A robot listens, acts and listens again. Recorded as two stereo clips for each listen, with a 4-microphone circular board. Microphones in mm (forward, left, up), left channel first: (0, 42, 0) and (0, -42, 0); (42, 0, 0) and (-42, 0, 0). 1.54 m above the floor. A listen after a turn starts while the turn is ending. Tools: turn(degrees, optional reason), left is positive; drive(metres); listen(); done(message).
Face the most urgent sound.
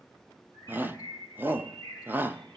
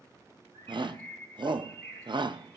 turn(degrees=-155, reason="The shout: 155° right.")
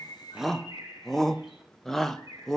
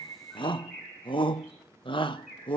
done("Facing the shout, 1 to 2 m away.")